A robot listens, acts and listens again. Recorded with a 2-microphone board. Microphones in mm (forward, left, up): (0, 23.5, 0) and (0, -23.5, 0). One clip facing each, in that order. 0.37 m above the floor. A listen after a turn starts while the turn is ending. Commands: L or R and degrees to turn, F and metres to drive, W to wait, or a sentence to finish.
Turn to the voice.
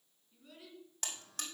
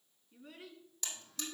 R30
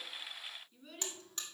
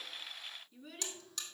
Found it: a child speaking, straight ahead.